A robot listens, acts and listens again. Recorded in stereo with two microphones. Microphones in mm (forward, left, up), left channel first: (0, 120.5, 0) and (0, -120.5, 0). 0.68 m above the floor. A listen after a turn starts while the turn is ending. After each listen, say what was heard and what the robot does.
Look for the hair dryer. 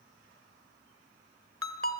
Keep listening.
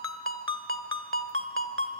Keep listening.
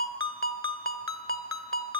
I can't make out a hair dryer to turn to.